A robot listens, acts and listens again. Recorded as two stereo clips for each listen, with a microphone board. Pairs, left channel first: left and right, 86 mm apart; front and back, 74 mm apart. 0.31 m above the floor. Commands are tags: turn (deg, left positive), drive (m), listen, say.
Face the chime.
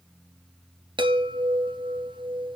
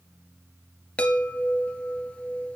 <turn deg="-75"/>
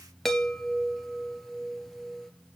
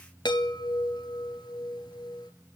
<say>Found it: a chime, straight ahead.</say>